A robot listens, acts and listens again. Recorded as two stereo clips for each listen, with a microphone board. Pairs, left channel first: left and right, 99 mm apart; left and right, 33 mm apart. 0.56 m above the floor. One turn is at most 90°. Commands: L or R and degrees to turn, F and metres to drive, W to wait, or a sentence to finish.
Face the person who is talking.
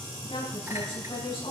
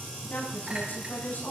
L65
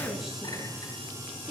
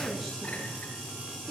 Facing the woman speaking, over 4 m away.